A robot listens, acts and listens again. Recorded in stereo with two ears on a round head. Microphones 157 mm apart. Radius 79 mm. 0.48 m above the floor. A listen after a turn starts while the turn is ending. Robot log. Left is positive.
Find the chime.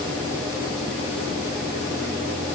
cmd idle
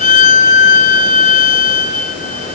cmd idle
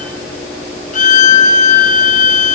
end: I can't make out a chime to turn to.